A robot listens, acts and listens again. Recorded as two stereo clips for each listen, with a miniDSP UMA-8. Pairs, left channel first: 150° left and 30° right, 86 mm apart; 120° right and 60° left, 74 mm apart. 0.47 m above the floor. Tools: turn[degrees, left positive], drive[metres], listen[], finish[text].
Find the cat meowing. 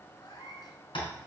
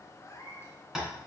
Thought: The cat meowing: 175° right.
Action: turn[-175]
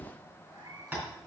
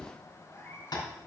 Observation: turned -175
Thought: The cat meowing is now 65° right.
Action: turn[-65]
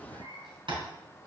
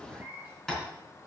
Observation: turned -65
Thought: The cat meowing is now 10° right.
Action: turn[-10]
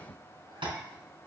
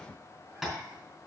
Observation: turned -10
Action: listen[]
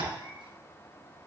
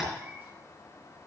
Action: finish[Facing the cat meowing.]